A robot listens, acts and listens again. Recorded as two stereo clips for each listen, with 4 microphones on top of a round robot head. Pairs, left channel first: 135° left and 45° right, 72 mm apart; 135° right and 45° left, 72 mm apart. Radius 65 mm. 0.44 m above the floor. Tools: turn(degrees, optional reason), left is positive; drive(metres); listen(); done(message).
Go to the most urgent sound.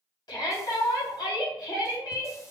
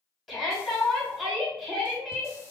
turn(degrees=135, reason="The shout: 135° left.")
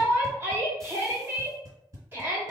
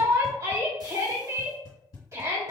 turn(degrees=10, reason="The shout is now 10° left.")
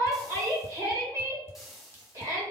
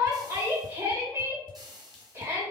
drive(metres=1.0)
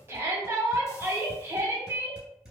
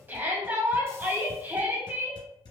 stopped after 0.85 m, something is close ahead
done("Arrived at the shout, straight ahead.")